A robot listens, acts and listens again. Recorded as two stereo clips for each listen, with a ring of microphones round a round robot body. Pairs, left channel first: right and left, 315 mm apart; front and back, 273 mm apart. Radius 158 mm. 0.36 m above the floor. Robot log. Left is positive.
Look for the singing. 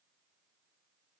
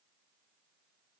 cmd idle
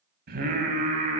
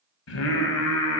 note: The singing: 25° left.
cmd yaw +25
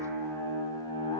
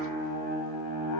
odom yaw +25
note: The singing is now 15° right.
cmd yaw -15
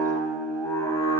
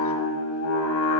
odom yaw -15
note: The singing is now 15° right.
cmd yaw -15
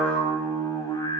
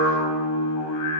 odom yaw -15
note: The singing is now 15° right.
cmd yaw -15
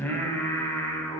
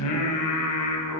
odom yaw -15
end: Facing the singing, 2 to 4 m away.